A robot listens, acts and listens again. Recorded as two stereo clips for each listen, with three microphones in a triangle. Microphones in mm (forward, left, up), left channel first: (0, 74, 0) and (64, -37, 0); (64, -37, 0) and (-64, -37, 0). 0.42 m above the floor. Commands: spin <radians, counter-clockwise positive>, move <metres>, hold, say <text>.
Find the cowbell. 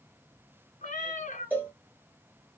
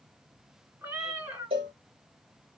spin -2.36
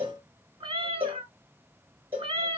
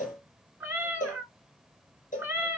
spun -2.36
spin 0.26
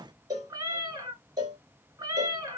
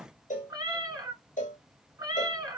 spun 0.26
say Facing the cowbell, 1 to 2 m away.